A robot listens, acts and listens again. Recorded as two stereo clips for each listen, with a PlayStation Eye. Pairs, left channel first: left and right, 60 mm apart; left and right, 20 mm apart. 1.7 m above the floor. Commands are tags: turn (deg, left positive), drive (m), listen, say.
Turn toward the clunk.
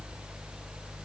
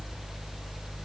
<listen/>
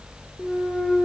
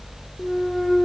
<turn deg="30"/>
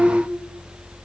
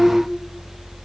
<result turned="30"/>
<turn deg="-20"/>
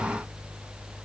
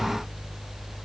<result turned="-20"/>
<say>I heard a clunk from this way, but can't make it out now.</say>